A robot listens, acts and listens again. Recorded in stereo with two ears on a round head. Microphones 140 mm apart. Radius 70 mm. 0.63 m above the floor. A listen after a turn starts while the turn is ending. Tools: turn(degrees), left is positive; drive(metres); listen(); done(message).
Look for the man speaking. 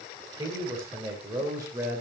turn(degrees=-15)
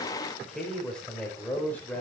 turn(degrees=10)
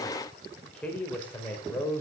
turn(degrees=15)
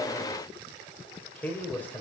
turn(degrees=10)
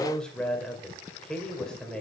done("Facing the man speaking.")